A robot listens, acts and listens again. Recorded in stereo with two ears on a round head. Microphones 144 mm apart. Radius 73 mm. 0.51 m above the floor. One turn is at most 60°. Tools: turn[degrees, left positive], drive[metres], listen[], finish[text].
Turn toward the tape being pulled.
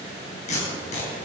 Thought: The tape being pulled: about 45° left or 135° left.
Action: turn[45]
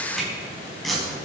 Action: finish[Found it: tape being pulled, straight ahead, over 4 m away.]